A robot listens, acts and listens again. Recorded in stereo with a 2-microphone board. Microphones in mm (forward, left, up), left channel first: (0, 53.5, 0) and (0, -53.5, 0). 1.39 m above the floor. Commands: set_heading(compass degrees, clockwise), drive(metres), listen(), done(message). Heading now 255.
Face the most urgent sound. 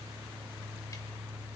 listen()
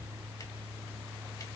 listen()
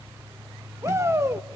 set_heading(280)
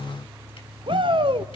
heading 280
set_heading(50)
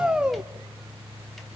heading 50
set_heading(60)
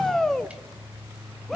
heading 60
done("Found it: a shout, straight ahead, 1 to 2 m away.")